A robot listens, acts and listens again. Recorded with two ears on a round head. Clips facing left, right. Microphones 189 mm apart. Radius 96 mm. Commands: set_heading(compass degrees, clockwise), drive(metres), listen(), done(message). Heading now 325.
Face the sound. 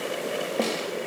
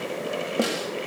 set_heading(355)
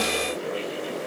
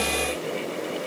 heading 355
listen()
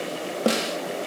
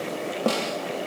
set_heading(335)
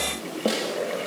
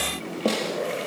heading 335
done("Found it: a snare drum, straight ahead, 2 to 4 m away.")